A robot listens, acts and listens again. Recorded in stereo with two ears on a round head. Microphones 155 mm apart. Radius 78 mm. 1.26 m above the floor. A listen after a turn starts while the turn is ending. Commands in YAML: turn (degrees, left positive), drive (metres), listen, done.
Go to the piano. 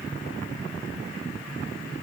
listen: true
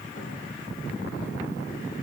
listen: true
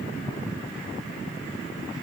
done: "I can't make out a piano to turn to."